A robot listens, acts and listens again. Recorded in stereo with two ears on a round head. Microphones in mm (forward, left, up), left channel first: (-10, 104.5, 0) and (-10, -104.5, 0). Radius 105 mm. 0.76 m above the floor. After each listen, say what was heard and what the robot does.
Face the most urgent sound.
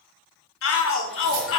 The shout: about 55° left or 125° left. Turn 55° left.
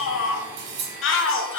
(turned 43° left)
So it is at 65° left. Turn 65° left.
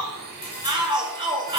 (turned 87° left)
The shout is now 20° right. Turn 20° right.
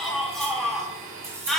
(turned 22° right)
Found it: a shout, straight ahead.